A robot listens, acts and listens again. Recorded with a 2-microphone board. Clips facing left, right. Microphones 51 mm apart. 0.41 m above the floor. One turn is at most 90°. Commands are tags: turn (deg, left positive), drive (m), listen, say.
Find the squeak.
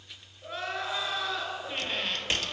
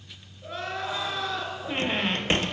<turn deg="-30"/>
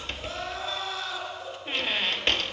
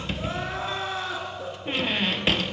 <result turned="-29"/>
<say>Found it: a squeak, straight ahead, under 1 m away.</say>